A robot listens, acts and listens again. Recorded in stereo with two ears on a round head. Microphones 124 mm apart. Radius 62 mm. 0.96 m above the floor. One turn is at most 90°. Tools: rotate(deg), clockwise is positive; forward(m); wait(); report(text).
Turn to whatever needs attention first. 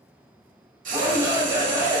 rotate(25)
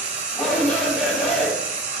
report("Facing the shout.")